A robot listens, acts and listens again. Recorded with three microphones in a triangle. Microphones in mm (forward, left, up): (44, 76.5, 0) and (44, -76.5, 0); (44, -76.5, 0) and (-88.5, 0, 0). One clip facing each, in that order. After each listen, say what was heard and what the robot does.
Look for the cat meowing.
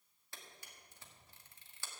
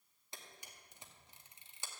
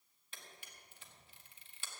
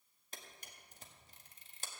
Keep listening.
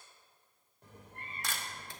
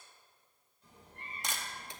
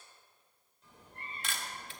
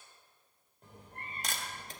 The cat meowing: 115° left. Turn 115° left.
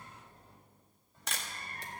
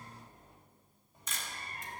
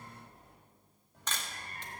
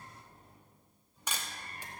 The cat meowing is now 20° right. Turn 20° right.
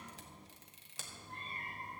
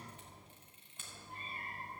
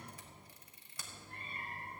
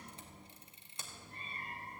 Found it: a cat meowing, straight ahead, over 4 m away.